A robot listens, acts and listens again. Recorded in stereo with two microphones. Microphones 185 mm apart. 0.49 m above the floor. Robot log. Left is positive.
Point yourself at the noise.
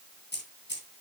note: The keys jangling: about 75° left or 105° left.
cmd yaw +75
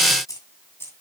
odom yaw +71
note: So it is at 15° left.
cmd yaw +15
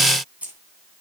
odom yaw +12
note: The keys jangling is now 10° right.
cmd yaw -10
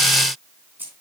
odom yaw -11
note: The keys jangling is now 10° right.
cmd yaw -10
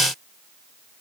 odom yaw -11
cmd idle
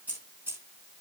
note: The keys jangling is now 10° right.
cmd yaw -10
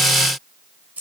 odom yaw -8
end: Found it: keys jangling, straight ahead, over 4 m away.